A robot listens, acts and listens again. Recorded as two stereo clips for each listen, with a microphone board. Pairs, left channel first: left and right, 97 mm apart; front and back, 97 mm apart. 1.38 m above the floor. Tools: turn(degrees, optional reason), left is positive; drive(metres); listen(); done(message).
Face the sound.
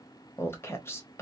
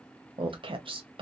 turn(degrees=155, reason="The woman speaking: 155° left.")
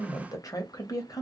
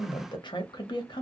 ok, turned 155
turn(degrees=35, reason="The woman speaking is now 35° left.")
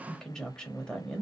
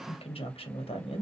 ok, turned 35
done("Found it: a woman speaking, straight ahead.")